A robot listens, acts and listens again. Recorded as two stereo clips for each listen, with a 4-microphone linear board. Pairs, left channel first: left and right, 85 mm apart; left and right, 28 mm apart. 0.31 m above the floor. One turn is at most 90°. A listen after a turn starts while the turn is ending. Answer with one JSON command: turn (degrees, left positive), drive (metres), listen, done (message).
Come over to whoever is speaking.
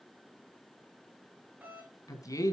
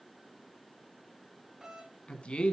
{"turn": 40}
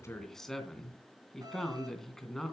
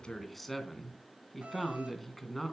{"drive": 1.0}
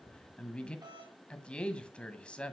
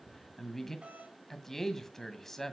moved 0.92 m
{"turn": 15}
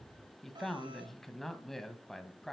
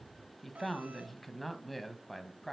{"drive": 1.0}
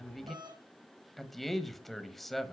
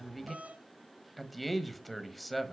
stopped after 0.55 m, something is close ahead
{"done": "Arrived at the man speaking, straight ahead."}